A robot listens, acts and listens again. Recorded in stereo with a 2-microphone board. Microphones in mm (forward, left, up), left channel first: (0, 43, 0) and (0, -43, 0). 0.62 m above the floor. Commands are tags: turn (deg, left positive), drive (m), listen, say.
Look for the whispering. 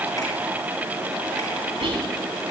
<turn deg="-90"/>
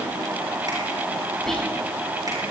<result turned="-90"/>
<say>Found it: whispering, straight ahead.</say>